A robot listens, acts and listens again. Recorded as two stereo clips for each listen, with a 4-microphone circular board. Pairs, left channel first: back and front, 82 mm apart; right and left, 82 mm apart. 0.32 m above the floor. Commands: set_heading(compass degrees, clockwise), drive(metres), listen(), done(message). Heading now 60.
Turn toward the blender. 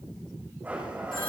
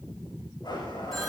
set_heading(130)
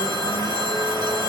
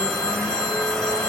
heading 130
done("Found it: a blender, straight ahead.")